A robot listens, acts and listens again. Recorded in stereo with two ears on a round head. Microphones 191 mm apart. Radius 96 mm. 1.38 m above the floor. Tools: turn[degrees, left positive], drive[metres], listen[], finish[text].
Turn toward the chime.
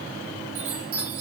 Thought: The chime: about 65° right or 115° right.
Action: turn[-65]
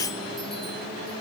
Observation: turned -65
Action: listen[]
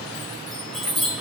Action: finish[Found it: a chime, straight ahead, over 4 m away.]